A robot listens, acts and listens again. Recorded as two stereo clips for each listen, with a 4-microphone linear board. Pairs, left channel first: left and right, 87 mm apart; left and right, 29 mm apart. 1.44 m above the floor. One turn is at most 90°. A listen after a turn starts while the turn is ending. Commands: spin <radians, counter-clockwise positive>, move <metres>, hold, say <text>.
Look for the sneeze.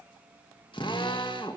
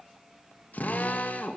hold
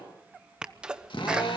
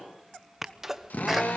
spin -0.52
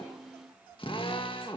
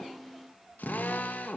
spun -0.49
hold
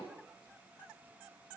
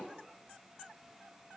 say I heard a sneeze, but can't make it out now. It was about 20° left or 140° right.